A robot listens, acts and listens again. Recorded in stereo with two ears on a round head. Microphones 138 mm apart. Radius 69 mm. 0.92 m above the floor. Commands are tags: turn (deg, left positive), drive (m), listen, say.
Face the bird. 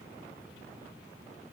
<listen/>
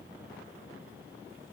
<listen/>
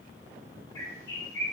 <turn deg="20"/>
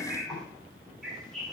<say>Facing the bird.</say>